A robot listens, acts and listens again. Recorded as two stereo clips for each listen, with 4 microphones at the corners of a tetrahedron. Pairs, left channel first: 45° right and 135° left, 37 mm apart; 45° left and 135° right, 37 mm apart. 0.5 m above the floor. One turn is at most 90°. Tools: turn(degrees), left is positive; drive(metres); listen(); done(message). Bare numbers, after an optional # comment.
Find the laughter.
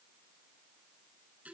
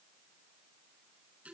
listen()
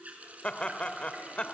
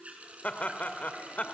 # The laughter: 10° left.
turn(10)
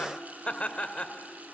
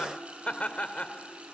done("Found it: laughter, straight ahead.")